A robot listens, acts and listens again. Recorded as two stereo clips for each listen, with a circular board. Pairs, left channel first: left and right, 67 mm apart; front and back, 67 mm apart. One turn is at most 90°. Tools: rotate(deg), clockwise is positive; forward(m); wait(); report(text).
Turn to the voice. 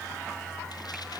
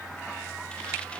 wait()
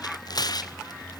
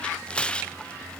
wait()
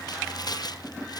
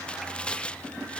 report("I can't make out anyone speaking to turn to.")